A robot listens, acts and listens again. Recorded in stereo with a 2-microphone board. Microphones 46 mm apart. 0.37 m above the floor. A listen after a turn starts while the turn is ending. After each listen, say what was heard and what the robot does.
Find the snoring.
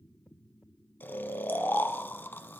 The snoring: about 50° left or 130° left. Turn 50° left.
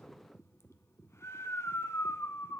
So it is at 80° left. Turn 80° left.
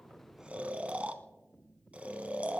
The snoring is now 30° right. Turn 30° right.
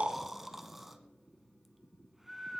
Facing the snoring, under 1 m away.